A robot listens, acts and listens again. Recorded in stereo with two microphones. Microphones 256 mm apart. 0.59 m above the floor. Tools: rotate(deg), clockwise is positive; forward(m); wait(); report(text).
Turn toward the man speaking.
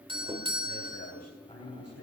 rotate(-90)
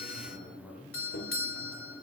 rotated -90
report("Found it: a man speaking, straight ahead, over 4 m away.")